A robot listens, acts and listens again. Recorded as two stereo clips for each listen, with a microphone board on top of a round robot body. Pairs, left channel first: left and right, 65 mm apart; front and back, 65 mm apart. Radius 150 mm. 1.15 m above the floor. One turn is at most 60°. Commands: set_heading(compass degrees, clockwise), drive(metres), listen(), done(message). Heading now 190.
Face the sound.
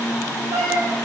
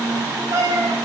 set_heading(250)
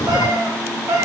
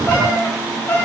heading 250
set_heading(310)
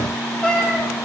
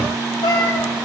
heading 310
set_heading(300)
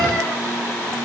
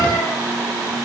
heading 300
listen()
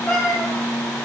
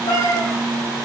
set_heading(280)
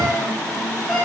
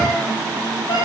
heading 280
done("Found it: a cat meowing, straight ahead, over 4 m away.")